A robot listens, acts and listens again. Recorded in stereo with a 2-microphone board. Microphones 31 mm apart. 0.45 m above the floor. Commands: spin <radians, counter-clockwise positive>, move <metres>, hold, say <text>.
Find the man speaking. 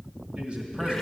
spin -0.70
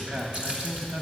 spin -1.75
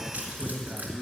spin -0.44
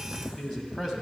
say Facing the man speaking, 2 to 4 m away.